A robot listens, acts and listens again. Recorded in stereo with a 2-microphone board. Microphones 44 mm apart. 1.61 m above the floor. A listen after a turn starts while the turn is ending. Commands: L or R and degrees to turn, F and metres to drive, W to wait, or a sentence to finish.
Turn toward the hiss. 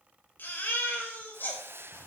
R60
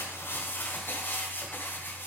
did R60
W
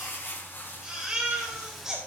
W
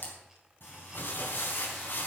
I heard a hiss, but can't make it out now. It was about straight ahead or 60° right.